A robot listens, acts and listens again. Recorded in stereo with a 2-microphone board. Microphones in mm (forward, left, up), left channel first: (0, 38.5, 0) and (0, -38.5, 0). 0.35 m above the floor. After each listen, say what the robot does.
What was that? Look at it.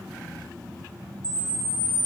Turn 90° left.
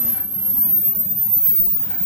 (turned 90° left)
Facing the camera shutter, 1 to 2 m away.